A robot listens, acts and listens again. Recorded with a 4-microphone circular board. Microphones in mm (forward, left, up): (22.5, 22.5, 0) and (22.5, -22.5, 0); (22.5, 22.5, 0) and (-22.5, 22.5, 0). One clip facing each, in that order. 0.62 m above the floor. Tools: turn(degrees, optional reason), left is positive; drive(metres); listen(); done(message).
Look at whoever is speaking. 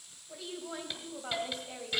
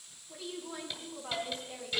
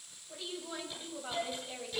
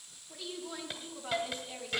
turn(degrees=70, reason="The woman speaking: 70° left.")
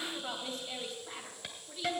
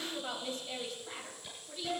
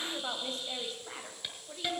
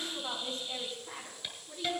done("Found it: a woman speaking, straight ahead.")